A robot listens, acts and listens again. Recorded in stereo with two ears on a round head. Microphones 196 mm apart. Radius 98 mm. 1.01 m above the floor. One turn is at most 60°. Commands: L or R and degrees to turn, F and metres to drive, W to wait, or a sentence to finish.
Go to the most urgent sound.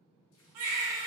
R60
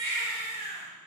R45
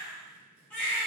L10
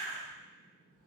F1.0
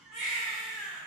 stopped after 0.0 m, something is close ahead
Blocked. The baby crying is further on, straight ahead.